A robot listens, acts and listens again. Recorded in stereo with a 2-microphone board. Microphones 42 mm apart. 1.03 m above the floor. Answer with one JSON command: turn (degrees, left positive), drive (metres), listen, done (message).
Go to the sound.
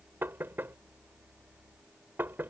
{"turn": -60}
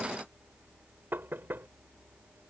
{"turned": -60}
{"turn": -60}
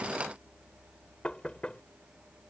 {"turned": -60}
{"turn": 30}
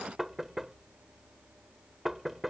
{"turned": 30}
{"drive": 1.0}
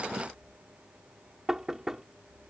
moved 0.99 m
{"turn": -10}
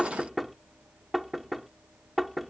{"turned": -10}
{"drive": 1.0}
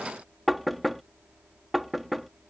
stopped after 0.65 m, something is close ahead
{"done": "Arrived at the knocking, straight ahead."}